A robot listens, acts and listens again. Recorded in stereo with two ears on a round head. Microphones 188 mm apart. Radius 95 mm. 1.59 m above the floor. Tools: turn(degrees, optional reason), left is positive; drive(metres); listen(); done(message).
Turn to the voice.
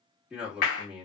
turn(degrees=-30)
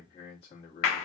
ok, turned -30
turn(degrees=30, reason="So it is at 30° left.")
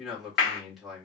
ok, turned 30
done("Facing the man speaking, 1 to 2 m away.")